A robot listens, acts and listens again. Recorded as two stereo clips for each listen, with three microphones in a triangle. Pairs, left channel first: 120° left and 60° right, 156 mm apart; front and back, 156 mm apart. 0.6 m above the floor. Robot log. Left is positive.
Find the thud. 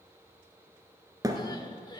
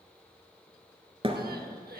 note: The thud: 125° right.
cmd yaw -125
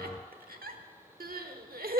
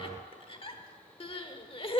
end: I heard a thud from this way, but can't make it out now.